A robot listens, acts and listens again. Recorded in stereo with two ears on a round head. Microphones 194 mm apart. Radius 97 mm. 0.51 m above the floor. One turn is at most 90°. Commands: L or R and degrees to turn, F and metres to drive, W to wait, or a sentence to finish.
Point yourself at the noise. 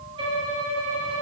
R25
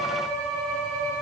Facing the violin, 1 to 2 m away.